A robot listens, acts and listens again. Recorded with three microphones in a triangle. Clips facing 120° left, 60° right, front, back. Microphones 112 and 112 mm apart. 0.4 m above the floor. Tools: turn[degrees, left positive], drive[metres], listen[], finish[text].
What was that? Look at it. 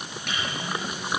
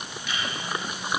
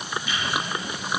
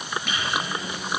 Thought: The microwave: 155° left.
Action: turn[155]
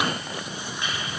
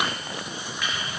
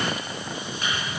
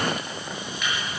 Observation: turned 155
Thought: The microwave is now 55° left.
Action: turn[55]
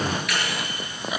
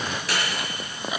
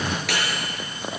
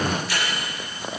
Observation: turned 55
Action: finish[Found it: a microwave, straight ahead.]